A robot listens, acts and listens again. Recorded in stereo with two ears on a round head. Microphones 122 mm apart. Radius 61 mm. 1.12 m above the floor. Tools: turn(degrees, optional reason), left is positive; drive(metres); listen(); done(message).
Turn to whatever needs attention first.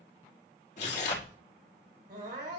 turn(degrees=-65, reason="The crying: about 65° right or 115° right.")
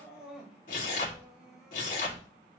done("Found it: crying, straight ahead.")